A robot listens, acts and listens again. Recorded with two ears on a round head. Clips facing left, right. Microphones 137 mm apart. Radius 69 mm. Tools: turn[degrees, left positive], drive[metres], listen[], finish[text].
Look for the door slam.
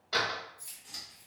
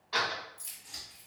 Thought: The door slam: about 50° left or 130° left.
Action: turn[50]
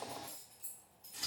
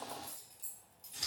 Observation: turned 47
Action: listen[]
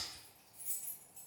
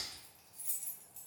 Action: finish[I heard a door slam, but can't make it out now. It was about 5° left or 85° left.]